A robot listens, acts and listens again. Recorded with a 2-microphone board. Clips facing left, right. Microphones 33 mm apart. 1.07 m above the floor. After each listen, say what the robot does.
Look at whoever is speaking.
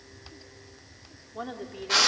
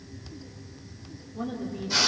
Turn 65° left.
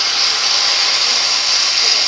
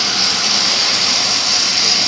Keep listening.
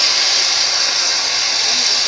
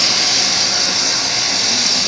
Keep listening.
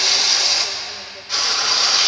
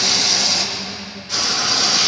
I heard a woman speaking, but can't make it out now. It was about straight ahead or 50° left.